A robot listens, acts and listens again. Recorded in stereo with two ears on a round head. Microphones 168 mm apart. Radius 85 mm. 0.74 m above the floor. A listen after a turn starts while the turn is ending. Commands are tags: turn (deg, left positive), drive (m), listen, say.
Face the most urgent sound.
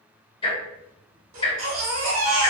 <turn deg="-90"/>
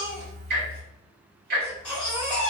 <say>Facing the baby crying.</say>